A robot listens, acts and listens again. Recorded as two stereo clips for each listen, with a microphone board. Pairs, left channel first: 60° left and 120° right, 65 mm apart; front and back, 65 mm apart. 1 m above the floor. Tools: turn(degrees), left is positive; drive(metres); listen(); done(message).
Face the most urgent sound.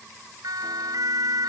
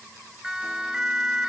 turn(degrees=-100)
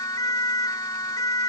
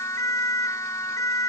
turn(degrees=35)
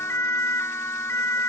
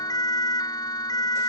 turn(degrees=10)
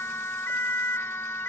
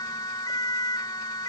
done("Found it: a siren, straight ahead.")